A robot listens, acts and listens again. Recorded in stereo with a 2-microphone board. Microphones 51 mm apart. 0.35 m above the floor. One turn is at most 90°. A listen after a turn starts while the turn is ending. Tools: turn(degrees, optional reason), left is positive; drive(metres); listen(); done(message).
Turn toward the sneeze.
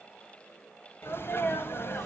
turn(degrees=50, reason="The sneeze: about 50° left or 130° left.")
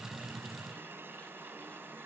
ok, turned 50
listen()
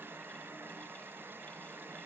done("I heard a sneeze, but can't make it out now. It was about straight ahead or 80° left.")